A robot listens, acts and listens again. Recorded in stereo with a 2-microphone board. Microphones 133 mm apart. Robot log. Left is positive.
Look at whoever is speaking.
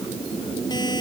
cmd idle
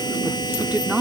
cmd yaw -30
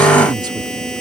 note: So it is at 145° right.
cmd yaw -145
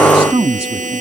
note: The woman speaking is now 50° right.
cmd yaw -50
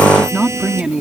note: The woman speaking is now 10° right.
cmd yaw -10
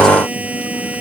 cmd idle
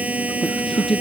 end: Facing the woman speaking.